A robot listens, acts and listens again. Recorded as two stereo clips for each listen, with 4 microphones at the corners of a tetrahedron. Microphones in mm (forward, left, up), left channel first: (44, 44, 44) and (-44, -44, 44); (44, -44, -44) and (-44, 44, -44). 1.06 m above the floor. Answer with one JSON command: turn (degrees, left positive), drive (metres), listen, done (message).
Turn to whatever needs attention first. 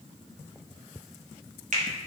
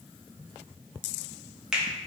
{"listen": true}
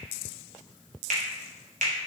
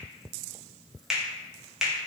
{"listen": true}
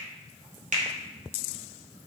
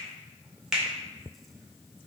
{"done": "I can't make out anything urgent, only a finger snap."}